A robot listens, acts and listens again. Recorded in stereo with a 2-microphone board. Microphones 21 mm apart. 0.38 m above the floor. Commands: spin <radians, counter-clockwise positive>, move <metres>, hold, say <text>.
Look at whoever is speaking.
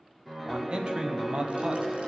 spin -0.87
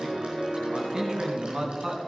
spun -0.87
spin -0.35
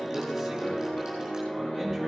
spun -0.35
hold
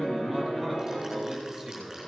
say Found it: a man speaking, straight ahead.